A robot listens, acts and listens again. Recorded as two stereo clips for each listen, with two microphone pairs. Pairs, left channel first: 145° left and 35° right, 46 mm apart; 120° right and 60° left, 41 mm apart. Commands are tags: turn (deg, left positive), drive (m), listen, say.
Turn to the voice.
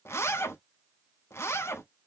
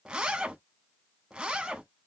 <listen/>
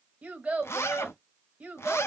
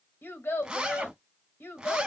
<turn deg="-100"/>
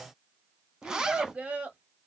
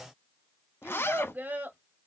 <turn deg="25"/>
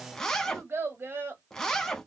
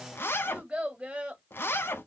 <say>Facing the child speaking.</say>